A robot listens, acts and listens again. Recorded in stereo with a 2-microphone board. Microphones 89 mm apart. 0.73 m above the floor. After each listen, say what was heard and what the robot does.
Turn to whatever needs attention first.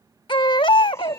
The baby crying: about 65° left or 115° left. Turn 65° left.
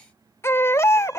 So it is at 35° left. Turn 35° left.
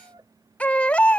The baby crying is now 15° left. Turn 15° left.
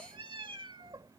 Keep listening.
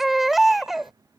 Found it: a baby crying, straight ahead.